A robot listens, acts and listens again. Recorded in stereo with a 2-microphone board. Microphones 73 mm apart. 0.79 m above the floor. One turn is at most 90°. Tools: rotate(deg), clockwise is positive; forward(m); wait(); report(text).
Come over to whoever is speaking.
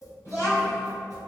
rotate(-45)
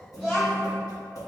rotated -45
forward(1.0)
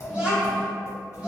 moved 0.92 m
rotate(15)
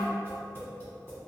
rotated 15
wait()
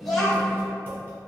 forward(1.0)
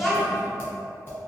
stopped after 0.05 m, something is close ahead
report("Arrived at the child speaking, straight ahead.")